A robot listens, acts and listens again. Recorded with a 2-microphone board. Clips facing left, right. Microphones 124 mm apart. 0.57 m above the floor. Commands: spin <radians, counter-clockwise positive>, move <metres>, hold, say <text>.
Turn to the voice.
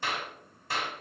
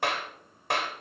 hold
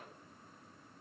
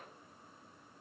hold
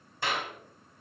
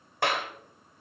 say I can't make out anyone speaking to turn to.